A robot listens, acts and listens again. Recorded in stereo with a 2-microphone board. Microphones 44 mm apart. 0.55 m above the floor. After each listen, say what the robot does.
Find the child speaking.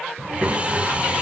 Turn 65° right.
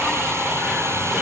Keep listening.
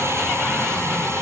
Keep listening.
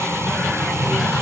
Turn 10° right.
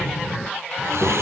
Facing the child speaking.